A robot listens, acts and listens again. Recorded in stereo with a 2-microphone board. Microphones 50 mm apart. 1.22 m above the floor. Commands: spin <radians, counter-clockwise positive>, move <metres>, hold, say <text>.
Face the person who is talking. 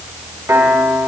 hold
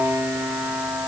hold
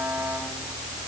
say I can't make out anyone speaking, only a piano.